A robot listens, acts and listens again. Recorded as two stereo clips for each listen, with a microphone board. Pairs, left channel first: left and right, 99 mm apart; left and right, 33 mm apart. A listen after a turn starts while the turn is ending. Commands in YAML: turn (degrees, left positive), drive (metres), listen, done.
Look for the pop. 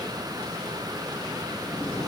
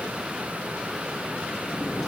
listen: true
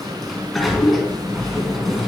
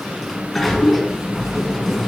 listen: true
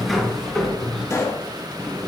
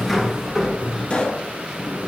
turn: 30
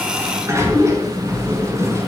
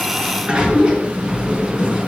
listen: true
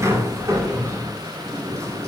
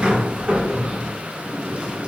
done: "I heard a pop, but can't make it out now. It was about straight ahead or 120° left."